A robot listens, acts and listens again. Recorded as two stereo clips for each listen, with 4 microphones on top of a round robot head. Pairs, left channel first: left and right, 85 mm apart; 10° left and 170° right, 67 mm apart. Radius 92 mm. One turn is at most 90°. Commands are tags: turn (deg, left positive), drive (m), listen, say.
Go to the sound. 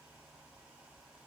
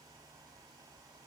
<listen/>
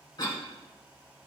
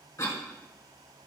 <turn deg="50"/>
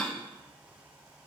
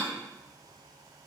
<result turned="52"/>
<drive m="1.0"/>
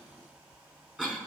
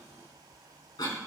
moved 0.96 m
<turn deg="-10"/>
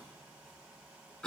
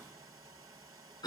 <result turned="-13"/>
<drive m="1.0"/>
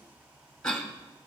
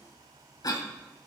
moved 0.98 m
<turn deg="10"/>
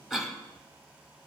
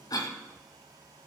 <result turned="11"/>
<drive m="1.0"/>
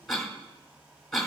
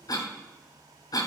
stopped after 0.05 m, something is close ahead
<say>Arrived at the cough, straight ahead.</say>